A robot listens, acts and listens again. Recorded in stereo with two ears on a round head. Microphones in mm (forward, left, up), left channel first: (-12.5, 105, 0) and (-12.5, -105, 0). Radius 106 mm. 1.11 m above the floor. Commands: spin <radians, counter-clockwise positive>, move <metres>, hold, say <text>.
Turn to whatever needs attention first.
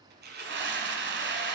spin -0.79
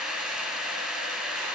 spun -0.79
say Found it: a scream, straight ahead.